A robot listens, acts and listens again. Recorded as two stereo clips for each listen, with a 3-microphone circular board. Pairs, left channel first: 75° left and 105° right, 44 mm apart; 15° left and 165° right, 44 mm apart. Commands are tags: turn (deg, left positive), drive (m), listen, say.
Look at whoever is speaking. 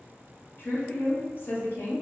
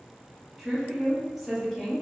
<turn deg="110"/>
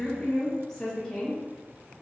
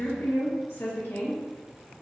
<say>Found it: a woman speaking, straight ahead, under 1 m away.</say>